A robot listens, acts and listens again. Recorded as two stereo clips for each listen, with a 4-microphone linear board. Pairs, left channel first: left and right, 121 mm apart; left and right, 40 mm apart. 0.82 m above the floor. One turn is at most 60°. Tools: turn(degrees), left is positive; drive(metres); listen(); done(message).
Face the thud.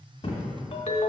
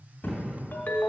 turn(degrees=40)
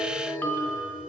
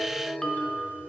listen()
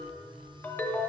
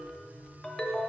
done("I heard a thud, but can't make it out now. It was about straight ahead or 100° left.")